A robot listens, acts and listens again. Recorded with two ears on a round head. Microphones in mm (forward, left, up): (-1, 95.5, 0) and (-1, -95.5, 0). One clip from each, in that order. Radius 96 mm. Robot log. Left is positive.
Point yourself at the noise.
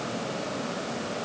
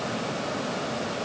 cmd idle
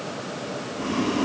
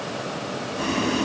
note: The boiling: about 60° right or 120° right.
cmd yaw -60
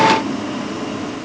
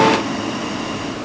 note: So it is at 60° right.
cmd yaw -60
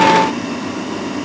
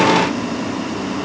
end: Found it: boiling, straight ahead, 2 to 4 m away.